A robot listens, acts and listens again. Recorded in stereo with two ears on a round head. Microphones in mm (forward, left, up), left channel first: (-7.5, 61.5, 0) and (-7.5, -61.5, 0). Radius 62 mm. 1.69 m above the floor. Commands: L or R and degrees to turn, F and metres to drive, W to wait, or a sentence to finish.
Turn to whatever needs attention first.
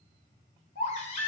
L55
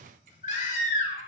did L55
L60
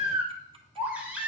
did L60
R10
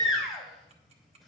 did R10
Facing the baby crying, 2 to 4 m away.